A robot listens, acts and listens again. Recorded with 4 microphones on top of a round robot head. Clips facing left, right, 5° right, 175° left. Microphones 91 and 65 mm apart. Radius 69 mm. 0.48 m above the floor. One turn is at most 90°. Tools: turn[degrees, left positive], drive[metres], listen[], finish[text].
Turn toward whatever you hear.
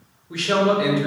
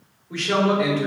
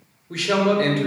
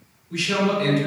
Thought: The man speaking: 10° left.
Action: turn[10]
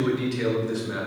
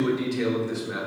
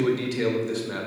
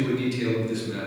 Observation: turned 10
Action: finish[Found it: a man speaking, straight ahead.]